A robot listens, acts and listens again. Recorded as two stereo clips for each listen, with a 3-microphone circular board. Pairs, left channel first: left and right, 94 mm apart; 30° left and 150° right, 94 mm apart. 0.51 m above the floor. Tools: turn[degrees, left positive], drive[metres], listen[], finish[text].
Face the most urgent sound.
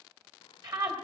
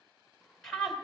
Thought: The scream: 55° right.
Action: turn[-55]
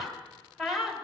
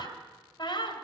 Action: finish[Found it: a scream, straight ahead.]